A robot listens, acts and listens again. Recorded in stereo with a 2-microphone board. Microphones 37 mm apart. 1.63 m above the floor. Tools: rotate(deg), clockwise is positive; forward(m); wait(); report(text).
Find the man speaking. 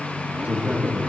rotate(40)
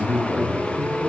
rotate(-15)
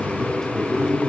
rotate(-15)
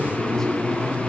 rotate(-10)
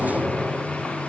wait()
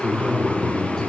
rotate(-15)
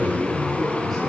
report("Found it: a man speaking, straight ahead, over 4 m away.")